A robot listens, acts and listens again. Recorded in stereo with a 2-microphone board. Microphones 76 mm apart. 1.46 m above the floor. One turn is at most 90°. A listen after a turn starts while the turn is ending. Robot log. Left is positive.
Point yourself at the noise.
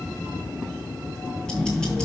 cmd yaw +30
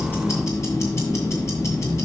note: So it is at 140° left.
cmd yaw +90
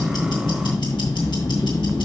note: The ticking is now 90° left.
cmd yaw +90
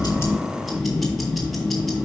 end: Found it: ticking, straight ahead, 1 to 2 m away.